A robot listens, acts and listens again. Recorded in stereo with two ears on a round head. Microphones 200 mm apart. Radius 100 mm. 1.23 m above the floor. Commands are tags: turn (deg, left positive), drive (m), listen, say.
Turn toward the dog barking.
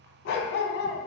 <turn deg="55"/>
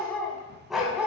<say>Found it: a dog barking, straight ahead.</say>